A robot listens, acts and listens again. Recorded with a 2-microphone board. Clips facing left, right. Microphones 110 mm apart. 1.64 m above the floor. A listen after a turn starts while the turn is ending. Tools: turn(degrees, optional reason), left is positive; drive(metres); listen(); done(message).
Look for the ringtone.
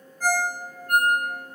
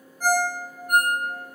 turn(degrees=-30)
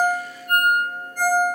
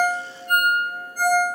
turn(degrees=-135, reason="So it is at 135° right.")
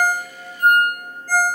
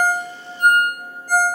turn(degrees=-20, reason="The ringtone is now 20° right.")
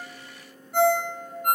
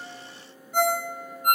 done("Facing the ringtone, 1 to 2 m away.")